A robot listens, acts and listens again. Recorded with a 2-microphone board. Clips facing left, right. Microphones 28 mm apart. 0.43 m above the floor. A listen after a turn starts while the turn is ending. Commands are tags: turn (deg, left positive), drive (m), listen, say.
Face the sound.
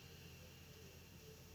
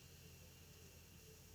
<listen/>
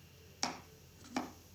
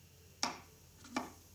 <turn deg="30"/>
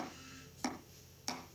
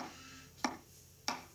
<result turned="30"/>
<turn deg="-30"/>
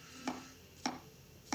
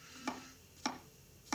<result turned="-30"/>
<say>Facing the chopping.</say>